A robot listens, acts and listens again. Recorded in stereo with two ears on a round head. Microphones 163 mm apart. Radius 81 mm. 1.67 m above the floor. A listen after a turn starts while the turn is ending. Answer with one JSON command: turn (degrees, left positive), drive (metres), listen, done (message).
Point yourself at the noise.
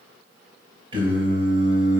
{"turn": -35}
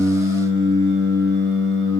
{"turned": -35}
{"turn": -110}
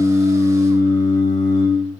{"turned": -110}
{"turn": 40}
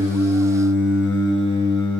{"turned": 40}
{"turn": 10}
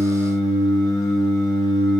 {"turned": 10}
{"done": "Facing the singing."}